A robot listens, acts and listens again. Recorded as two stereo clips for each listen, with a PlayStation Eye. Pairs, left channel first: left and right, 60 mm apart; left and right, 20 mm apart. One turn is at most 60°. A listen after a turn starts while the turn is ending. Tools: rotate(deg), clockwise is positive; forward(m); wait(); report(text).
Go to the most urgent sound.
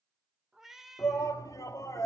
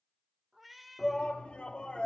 rotate(-60)
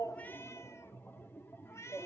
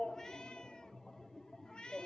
rotate(-40)
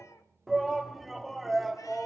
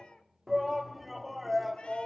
forward(1.0)
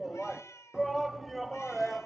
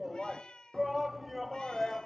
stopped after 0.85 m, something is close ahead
report("I am next to the shout.")